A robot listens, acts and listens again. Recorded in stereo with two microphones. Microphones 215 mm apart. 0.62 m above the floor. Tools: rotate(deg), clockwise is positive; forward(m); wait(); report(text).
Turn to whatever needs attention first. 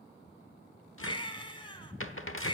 rotate(-20)
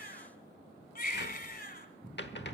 rotate(-135)
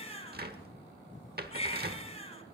rotate(-30)
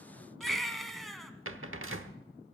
report("Found it: a baby crying, straight ahead, 1 to 2 m away.")